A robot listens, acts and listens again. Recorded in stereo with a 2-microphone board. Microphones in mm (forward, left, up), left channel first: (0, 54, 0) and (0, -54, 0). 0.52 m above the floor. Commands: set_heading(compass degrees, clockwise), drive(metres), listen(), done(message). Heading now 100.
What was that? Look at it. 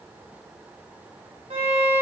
set_heading(165)
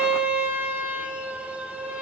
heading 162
set_heading(177)
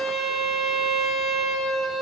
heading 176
done("Facing the violin.")